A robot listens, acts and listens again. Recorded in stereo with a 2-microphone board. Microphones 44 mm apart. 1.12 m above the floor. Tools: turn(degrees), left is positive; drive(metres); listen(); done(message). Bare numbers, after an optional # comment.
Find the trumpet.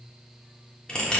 listen()
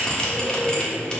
listen()
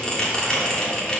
done("I can't make out a trumpet, only a bell.")